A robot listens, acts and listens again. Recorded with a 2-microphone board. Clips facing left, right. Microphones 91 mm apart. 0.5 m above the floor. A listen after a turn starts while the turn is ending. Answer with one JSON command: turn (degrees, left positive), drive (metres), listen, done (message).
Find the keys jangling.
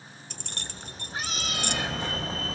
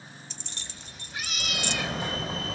{"turn": 50}
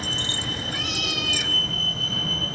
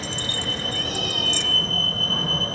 {"listen": true}
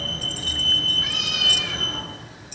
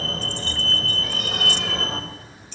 {"listen": true}
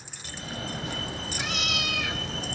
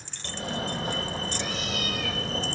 {"done": "Facing the keys jangling."}